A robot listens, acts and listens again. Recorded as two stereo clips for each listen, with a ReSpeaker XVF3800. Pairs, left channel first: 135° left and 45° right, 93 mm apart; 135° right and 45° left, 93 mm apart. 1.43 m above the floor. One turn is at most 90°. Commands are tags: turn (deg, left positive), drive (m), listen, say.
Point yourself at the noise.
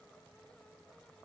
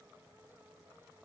<listen/>
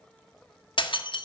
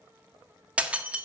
<turn deg="90"/>
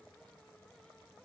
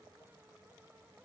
<turn deg="30"/>
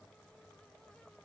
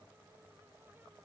<say>Facing where the breaking glass came from. I can't hear it now.</say>